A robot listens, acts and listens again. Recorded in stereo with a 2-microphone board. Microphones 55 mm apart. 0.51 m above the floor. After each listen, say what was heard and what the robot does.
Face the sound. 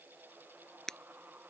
Turn 30° left.
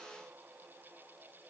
Keep listening.
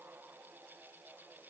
I heard breaking glass, but can't make it out now. It was about 20° right or 140° left.